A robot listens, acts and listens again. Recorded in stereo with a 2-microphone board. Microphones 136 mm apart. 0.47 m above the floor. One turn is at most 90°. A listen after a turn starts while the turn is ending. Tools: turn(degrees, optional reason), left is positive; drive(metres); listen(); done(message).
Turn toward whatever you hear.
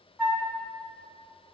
turn(degrees=-30)
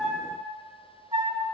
turn(degrees=-90, reason="So it is at 140° right.")
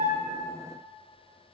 turn(degrees=-50, reason="Nothing new. It was at 50° right.")
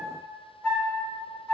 done("Found it: a flute, straight ahead.")